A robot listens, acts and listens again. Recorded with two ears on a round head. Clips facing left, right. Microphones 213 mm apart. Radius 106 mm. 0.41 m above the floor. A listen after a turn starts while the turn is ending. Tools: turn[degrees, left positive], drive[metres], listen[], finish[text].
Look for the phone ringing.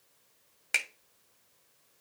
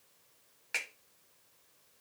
Action: listen[]
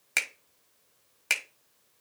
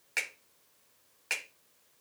Action: listen[]
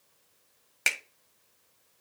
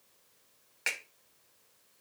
Action: finish[I can't make out a phone ringing to turn to.]